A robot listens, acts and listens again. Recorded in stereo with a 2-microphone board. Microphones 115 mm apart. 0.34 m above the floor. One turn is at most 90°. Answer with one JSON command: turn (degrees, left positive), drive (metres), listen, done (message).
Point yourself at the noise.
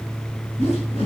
{"turn": 65}
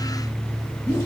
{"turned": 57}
{"turn": 30}
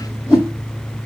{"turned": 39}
{"done": "Found it: a whoosh, straight ahead."}